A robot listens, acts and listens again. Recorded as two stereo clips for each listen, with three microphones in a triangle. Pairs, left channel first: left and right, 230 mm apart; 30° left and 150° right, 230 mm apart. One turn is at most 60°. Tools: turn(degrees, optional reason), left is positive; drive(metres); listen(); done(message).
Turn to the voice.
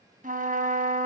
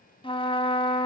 listen()
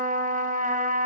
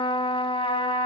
listen()
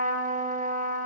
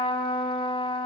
done("I can't make out anyone speaking, only a trumpet.")